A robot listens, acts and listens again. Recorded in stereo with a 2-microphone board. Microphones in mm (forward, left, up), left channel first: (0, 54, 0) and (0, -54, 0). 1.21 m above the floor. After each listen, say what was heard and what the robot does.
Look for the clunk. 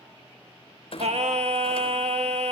The clunk: about 65° left or 115° left. Turn 65° left.
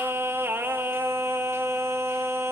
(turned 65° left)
Keep listening.
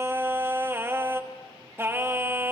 I heard a clunk, but can't make it out now. It was about straight ahead or 50° left.